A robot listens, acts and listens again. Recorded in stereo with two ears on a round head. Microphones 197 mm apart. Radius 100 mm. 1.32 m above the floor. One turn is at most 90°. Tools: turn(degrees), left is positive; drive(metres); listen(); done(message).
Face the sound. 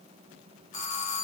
turn(degrees=35)
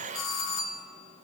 turn(degrees=90)
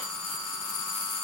turn(degrees=10)
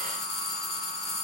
done("Facing the doorbell.")